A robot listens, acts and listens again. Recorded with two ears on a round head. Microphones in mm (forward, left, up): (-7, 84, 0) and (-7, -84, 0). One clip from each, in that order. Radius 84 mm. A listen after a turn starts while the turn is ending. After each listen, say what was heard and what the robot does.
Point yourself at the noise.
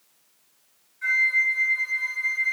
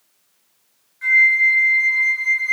The flute: about 65° right or 115° right. Turn 65° right.
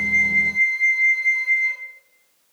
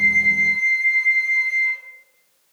So it is at 40° right. Turn 40° right.
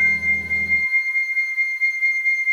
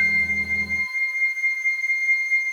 Facing the flute.